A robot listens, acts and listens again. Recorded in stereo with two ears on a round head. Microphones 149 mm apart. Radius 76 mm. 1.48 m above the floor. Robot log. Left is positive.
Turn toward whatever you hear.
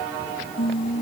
note: The singing: about 35° left or 145° left.
cmd yaw +35
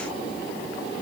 cmd idle
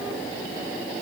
cmd idle
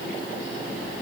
end: I heard singing, but can't make it out now. It was about straight ahead or 110° left.